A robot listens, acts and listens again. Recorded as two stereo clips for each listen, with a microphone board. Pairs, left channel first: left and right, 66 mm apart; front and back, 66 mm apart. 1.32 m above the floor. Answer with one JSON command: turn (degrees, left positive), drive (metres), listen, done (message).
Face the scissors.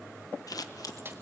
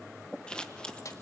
{"turn": 75}
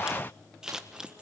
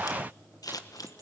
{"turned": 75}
{"turn": -10}
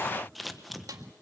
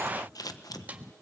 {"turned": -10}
{"done": "Facing the scissors."}